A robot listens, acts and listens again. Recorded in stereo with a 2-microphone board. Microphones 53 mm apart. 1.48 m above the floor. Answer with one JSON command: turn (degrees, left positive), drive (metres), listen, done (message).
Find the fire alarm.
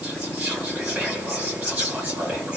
{"listen": true}
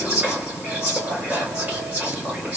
{"listen": true}
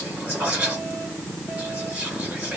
{"done": "I can't make out a fire alarm, only whispering."}